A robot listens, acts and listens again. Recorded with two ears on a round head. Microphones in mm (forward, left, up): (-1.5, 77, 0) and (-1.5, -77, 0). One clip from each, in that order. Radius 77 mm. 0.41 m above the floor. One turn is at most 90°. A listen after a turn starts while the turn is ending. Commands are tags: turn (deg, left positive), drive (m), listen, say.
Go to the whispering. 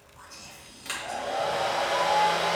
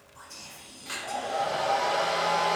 <turn deg="-45"/>
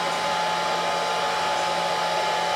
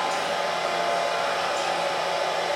<listen/>
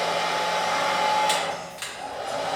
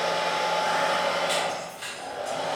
<listen/>
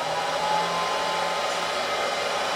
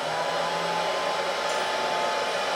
<say>I heard whispering, but can't make it out now. It was about straight ahead or 90° right. I did not reach it.</say>